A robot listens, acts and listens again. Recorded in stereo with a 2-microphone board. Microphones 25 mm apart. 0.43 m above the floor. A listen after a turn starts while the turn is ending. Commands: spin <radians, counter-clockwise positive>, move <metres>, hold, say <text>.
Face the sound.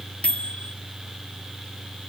spin 0.87
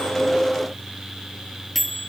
say Facing the microwave.